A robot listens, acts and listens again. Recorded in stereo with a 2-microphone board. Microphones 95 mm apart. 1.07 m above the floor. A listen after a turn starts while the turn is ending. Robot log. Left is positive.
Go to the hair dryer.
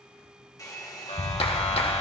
note: The hair dryer: about 40° left or 140° left.
cmd yaw +40
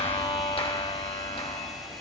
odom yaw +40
cmd idle
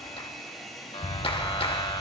cmd fwd 1.0
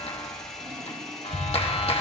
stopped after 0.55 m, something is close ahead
end: Something is in my way. I am facing the hair dryer but have not reached it.